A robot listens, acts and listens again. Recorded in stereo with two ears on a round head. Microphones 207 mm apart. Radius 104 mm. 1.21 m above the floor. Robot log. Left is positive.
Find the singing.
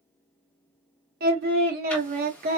note: The singing: about 40° right or 140° right.
cmd yaw -40
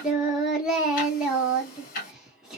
end: Found it: singing, straight ahead.